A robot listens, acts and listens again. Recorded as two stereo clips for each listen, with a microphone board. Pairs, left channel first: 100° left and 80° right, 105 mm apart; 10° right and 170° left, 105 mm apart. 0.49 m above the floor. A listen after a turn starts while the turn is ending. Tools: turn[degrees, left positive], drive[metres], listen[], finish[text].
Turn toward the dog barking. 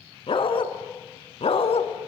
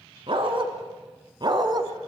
Thought: The dog barking: 120° left.
Action: turn[120]
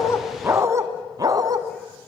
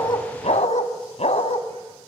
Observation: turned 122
Thought: The dog barking is now 30° right.
Action: turn[-30]
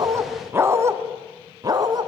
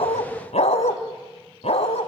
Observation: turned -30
Thought: The dog barking is now 30° right.
Action: turn[-30]
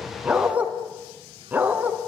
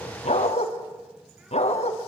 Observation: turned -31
Action: finish[Facing the dog barking, 1 to 2 m away.]